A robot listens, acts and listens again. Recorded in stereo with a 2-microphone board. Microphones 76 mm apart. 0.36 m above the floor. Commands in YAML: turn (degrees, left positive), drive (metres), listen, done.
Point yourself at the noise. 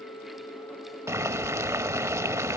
turn: -40
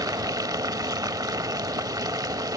turn: -95
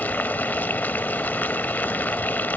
turn: 30
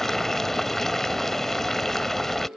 done: "Facing the boiling."